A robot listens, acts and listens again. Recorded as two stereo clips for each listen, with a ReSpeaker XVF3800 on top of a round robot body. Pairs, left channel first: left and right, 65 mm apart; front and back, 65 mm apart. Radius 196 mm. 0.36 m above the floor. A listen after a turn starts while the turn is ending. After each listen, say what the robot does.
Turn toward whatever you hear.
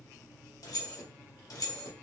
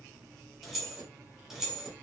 Turn 100° left.
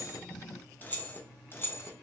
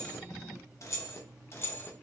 Turn 50° left.
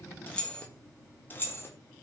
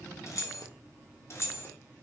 Turn 40° left.
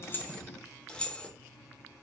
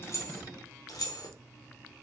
Turn 15° left.
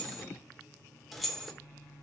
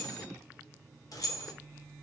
Facing the keys jangling.